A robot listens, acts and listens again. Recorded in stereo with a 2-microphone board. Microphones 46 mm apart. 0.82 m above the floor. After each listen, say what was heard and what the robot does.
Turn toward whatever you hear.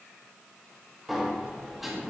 Turn 30° left.
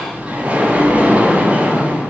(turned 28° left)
So it is at 30° right. Turn 30° right.
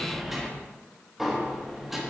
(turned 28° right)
Facing the sliding door.